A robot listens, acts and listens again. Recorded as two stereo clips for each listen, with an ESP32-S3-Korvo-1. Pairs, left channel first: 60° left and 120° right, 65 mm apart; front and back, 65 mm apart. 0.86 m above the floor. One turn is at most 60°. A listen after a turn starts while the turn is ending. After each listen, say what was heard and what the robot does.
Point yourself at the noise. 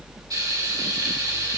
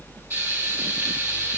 The frying: 130° right. Turn 60° right.
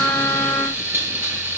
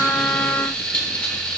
The frying is now 75° right. Turn 60° right.
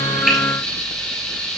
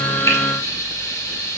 The frying is now 20° right. Turn 20° right.
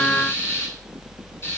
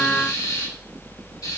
Found it: frying, straight ahead.